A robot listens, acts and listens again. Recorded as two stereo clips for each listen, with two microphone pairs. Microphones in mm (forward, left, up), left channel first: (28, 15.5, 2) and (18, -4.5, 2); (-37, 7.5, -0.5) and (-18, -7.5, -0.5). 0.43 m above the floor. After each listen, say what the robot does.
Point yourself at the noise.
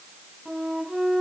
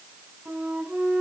Turn 35° right.
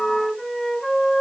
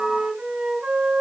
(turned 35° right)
Facing the flute, 2 to 4 m away.